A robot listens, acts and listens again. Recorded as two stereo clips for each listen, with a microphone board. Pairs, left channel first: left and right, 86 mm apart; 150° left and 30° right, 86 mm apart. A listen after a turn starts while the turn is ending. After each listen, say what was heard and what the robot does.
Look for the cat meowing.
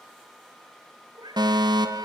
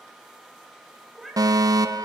The cat meowing: 120° right. Turn 120° right.
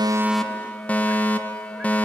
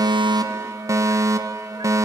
Keep listening.
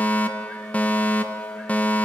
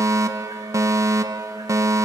Keep listening.
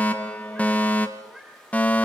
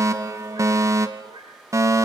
The cat meowing is now 10° right. Turn 10° right.
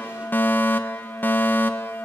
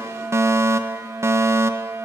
Keep listening.
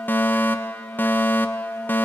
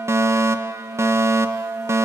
Keep listening.
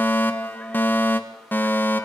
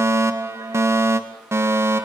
Facing where the cat meowing came from. I can't hear it now.